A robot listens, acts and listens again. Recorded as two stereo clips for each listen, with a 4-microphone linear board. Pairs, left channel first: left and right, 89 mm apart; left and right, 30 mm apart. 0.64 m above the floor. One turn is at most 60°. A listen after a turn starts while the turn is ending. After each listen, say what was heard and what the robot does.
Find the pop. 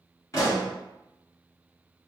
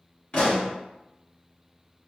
The pop: about 35° left or 145° left. Turn 35° left.
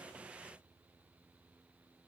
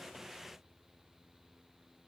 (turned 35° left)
Keep listening.
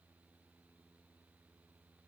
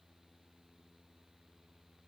I heard a pop, but can't make it out now. It was about straight ahead or 110° left.